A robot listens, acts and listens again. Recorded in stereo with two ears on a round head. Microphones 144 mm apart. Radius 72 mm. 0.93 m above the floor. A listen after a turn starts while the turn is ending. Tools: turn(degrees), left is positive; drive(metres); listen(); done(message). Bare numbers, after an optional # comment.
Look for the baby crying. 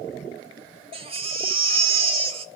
# The baby crying: about 35° right or 145° right.
turn(-35)
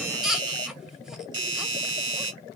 done("Found it: a baby crying, straight ahead.")